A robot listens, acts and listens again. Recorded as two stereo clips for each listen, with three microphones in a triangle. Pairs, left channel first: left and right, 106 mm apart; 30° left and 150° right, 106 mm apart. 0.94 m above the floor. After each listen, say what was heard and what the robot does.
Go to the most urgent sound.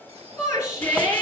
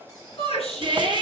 The shout: 30° left. Turn 30° left.
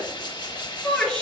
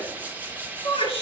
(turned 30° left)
Drive 1.0 m forward.
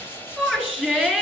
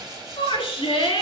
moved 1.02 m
Drive 1.0 m forward.
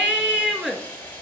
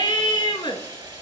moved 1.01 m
The shout is now 10° right. Turn 10° right.
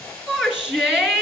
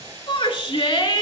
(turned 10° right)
Drive 1.0 m forward.
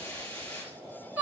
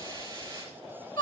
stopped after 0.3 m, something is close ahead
The shout is now 15° right. Turn 15° right.
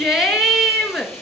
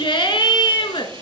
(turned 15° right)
I am next to the shout.